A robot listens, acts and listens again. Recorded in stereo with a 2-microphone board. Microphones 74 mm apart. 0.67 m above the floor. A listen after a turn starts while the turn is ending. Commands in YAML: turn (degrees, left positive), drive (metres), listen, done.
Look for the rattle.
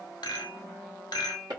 turn: 75
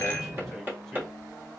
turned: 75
listen: true
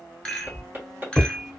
turn: 10
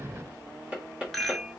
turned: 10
done: "Facing the rattle."